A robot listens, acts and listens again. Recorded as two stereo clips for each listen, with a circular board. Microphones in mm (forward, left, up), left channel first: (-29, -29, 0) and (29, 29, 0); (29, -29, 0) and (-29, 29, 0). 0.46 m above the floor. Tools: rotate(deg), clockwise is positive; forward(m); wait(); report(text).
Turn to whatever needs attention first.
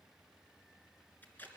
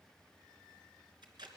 wait()
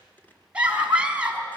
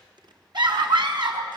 rotate(-120)
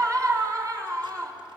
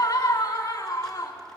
report("Found it: a scream, straight ahead.")